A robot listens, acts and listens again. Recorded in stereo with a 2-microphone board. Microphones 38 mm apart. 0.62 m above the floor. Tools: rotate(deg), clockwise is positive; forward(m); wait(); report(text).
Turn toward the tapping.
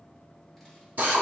wait()
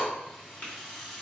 rotate(-35)
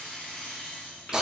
wait()
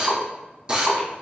wait()
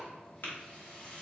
rotate(-110)
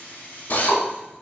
wait()
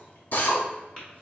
rotate(-25)
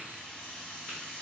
wait()
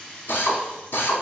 wait()
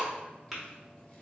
report("Found it: tapping, straight ahead.")